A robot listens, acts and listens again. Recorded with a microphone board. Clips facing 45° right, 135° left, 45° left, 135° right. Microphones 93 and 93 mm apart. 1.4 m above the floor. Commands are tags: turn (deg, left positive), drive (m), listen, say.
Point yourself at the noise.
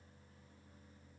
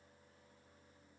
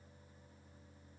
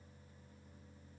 <listen/>
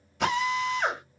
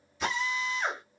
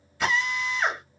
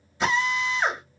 <turn deg="-65"/>
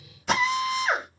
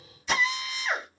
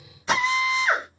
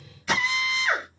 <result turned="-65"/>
<turn deg="-15"/>
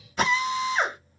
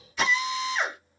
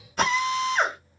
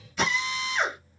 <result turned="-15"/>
<say>Facing the drill, 1 to 2 m away.</say>